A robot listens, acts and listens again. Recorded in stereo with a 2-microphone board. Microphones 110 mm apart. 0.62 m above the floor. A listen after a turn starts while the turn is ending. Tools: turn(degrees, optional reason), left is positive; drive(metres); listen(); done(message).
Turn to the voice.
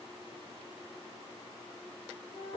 listen()
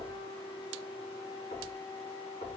listen()
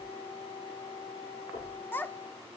turn(degrees=15, reason="The child speaking: about 15° left or 165° left.")
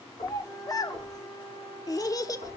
turn(degrees=150, reason="So it is at 150° left.")
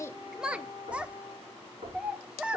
turn(degrees=-10, reason="The child speaking is now 10° right.")
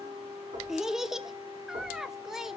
done("Facing the child speaking, under 1 m away.")